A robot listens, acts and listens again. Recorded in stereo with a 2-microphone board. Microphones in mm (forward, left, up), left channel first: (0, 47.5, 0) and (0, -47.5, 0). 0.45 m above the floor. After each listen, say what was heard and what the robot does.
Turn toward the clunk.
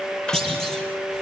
Turn 30° left.
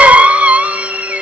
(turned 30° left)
Keep listening.
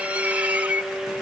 I heard a clunk, but can't make it out now. It was about 25° right or 145° left.